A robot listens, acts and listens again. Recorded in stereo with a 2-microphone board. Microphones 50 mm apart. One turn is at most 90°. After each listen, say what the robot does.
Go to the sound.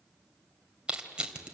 Turn 20° right.
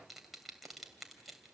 Keep listening.
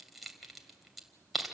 Drive 1.0 m forward.
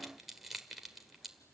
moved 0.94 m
Drive 1.0 m forward.
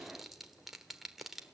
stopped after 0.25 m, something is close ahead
Keep listening.
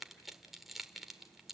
Arrived at the crushing, straight ahead.